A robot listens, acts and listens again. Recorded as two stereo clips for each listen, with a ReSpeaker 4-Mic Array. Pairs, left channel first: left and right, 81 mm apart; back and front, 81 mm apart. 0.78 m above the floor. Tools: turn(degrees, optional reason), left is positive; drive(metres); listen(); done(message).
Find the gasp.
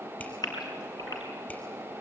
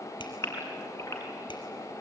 turn(degrees=125, reason="The gasp: 125° left.")
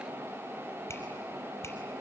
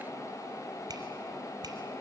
done("Facing where the gasp came from. I can't hear it now.")